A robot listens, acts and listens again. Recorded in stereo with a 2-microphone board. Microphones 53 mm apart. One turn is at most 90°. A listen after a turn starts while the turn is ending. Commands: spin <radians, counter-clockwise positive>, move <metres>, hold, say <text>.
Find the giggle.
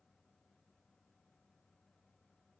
hold
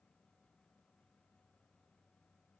hold
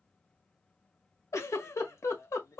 spin 1.31
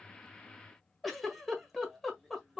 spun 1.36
say Facing the giggle, 1 to 2 m away.